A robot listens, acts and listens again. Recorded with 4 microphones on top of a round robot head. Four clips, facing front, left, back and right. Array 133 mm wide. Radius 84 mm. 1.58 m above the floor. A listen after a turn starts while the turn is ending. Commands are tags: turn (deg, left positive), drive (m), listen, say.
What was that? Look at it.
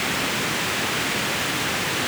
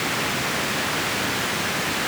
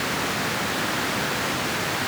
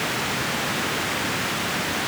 <listen/>
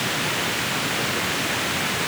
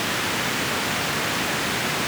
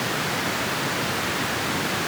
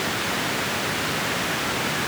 <listen/>
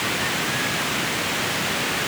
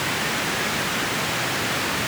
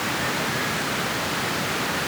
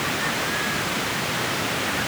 <say>I can't make out anything.</say>